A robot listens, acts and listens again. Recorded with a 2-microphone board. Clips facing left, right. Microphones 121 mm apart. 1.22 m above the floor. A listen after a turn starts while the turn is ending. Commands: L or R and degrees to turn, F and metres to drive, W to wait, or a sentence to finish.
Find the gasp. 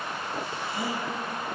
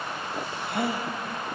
R65
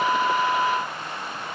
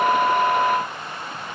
W
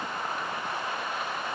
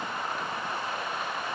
I heard a gasp, but can't make it out now. It was about straight ahead or 50° right.